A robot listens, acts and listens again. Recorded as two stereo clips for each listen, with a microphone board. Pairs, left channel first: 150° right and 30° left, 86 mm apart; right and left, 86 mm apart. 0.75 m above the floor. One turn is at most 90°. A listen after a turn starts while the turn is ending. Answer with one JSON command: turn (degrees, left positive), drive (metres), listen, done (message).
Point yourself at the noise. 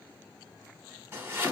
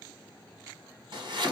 {"turn": 90}
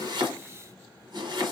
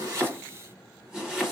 {"turn": 10}
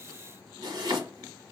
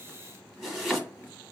{"done": "Found it: chopping, straight ahead, 1 to 2 m away."}